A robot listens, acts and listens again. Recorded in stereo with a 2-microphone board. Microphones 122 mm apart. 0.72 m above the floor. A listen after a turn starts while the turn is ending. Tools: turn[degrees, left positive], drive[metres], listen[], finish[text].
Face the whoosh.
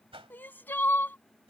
Thought: The whoosh: about 50° right or 130° right.
Action: turn[-50]
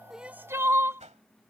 Thought: So it is at 80° right.
Action: turn[-80]
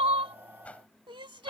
Thought: The whoosh is now 10° left.
Action: turn[10]
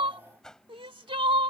Action: finish[Found it: a whoosh, straight ahead.]